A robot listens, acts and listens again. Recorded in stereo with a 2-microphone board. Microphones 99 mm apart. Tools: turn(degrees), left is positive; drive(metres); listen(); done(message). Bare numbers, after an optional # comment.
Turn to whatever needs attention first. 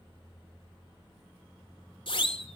# The siren: about 60° left or 120° left.
turn(60)
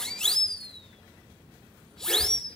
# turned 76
done("Found it: a siren, straight ahead.")